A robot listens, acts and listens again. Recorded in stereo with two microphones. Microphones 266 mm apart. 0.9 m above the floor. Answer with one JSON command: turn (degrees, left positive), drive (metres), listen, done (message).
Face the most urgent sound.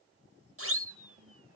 {"turn": -60}
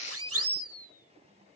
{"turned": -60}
{"turn": -60}
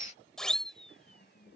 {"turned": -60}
{"done": "Found it: a siren, straight ahead."}